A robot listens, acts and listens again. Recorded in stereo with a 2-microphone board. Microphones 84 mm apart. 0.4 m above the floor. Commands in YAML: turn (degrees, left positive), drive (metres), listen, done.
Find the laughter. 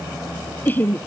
turn: 25
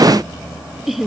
done: "Found it: laughter, straight ahead."